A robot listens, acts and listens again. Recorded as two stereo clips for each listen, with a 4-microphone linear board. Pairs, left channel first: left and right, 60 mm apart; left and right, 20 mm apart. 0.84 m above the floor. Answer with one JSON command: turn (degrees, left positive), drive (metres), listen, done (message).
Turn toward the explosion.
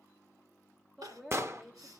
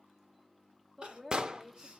{"turn": -50}
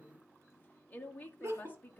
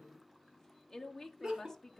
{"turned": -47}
{"listen": true}
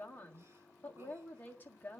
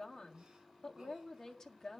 {"done": "I heard an explosion, but can't make it out now. It was about straight ahead or 85° right."}